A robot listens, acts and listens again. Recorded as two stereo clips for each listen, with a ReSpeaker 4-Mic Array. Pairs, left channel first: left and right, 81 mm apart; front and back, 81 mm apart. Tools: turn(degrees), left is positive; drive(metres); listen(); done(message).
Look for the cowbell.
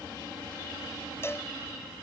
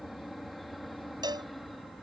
turn(degrees=150)
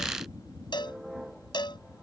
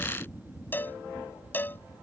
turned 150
turn(degrees=65)
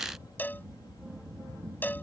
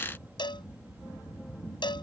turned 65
turn(degrees=20)
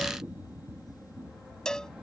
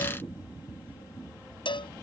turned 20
turn(degrees=10)
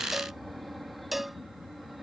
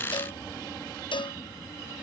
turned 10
done("Found it: a cowbell, straight ahead.")